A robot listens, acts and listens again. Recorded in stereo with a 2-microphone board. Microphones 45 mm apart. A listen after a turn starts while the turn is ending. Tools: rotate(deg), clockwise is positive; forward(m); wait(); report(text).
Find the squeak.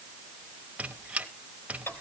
rotate(30)
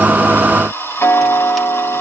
wait()
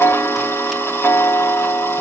wait()
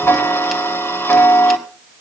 report("I heard a squeak, but can't make it out now. It was about straight ahead or 120° right.")